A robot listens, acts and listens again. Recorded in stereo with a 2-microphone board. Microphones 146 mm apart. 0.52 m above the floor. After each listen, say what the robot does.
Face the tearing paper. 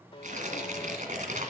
Turn 60° right.
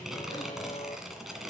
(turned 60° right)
Found it: tearing paper, straight ahead, 1 to 2 m away.